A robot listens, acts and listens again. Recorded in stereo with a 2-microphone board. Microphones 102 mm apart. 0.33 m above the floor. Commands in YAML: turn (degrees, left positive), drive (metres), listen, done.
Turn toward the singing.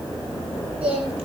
turn: -70
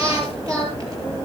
turn: -35
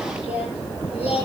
turn: -15
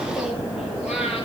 turn: -10
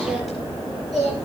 done: "Found it: singing, straight ahead."